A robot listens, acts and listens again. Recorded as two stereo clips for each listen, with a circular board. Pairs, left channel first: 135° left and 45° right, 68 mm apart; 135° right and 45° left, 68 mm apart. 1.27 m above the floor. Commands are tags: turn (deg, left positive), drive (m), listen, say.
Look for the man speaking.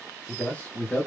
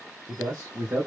<turn deg="70"/>
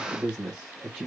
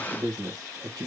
<turn deg="40"/>
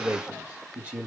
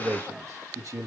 <turn deg="20"/>
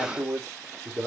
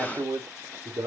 <turn deg="20"/>
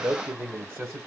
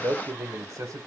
<turn deg="15"/>
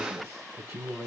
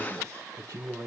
<say>Facing the man speaking, 1 to 2 m away.</say>